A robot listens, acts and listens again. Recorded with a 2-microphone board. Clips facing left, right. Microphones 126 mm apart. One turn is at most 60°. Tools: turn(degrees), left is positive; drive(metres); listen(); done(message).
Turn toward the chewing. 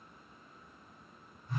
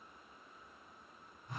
listen()
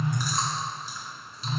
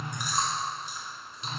turn(degrees=-20)
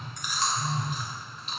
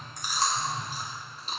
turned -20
turn(degrees=-60)
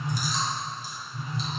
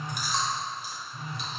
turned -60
turn(degrees=-60)
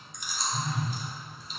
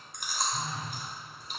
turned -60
turn(degrees=-60)
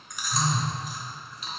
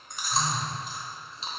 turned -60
turn(degrees=-30)
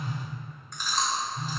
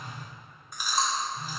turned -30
turn(degrees=-10)
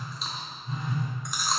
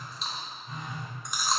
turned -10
done("Found it: chewing, straight ahead, under 1 m away.")